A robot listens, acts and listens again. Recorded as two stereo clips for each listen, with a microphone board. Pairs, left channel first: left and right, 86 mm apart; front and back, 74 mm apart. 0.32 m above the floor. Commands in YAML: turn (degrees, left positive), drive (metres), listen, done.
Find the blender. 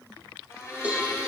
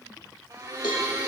turn: 145
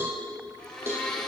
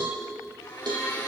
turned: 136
turn: 10
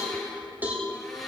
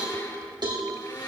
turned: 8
done: "Facing the blender."